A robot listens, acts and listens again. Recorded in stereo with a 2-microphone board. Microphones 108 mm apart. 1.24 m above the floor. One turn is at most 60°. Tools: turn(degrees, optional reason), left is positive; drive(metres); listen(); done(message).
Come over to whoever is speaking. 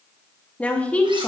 turn(degrees=30)
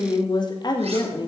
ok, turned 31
turn(degrees=60, reason="So it is at 135° left.")
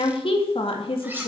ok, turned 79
turn(degrees=55, reason="The woman speaking is now 55° left.")
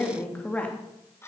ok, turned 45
turn(degrees=15, reason="The woman speaking is now 15° left.")
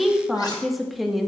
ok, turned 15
drive(metres=1.0)
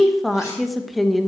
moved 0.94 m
drive(metres=1.0)
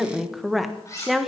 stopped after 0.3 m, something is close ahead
done("I am next to the woman speaking.")